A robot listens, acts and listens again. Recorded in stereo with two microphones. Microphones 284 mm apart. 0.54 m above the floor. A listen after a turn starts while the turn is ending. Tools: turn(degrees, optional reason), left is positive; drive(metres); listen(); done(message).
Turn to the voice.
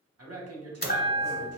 turn(degrees=-55, reason="The man speaking: about 55° right or 125° right.")
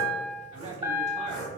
turn(degrees=-30, reason="So it is at 30° right.")
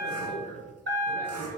turn(degrees=10, reason="The man speaking is now 10° left.")
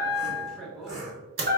done("Facing the man speaking.")